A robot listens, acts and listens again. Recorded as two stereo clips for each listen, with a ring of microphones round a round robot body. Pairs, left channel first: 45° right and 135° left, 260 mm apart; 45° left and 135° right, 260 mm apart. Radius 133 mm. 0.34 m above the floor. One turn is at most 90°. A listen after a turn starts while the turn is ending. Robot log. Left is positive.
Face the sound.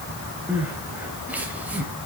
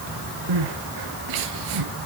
note: The crying: 140° right.
cmd yaw -90
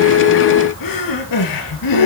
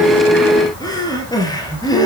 note: The crying is now 30° right.
cmd yaw -30
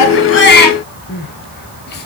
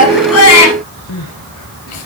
note: The crying is now 10° left.
cmd yaw +10
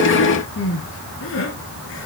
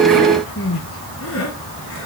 end: Found it: crying, straight ahead.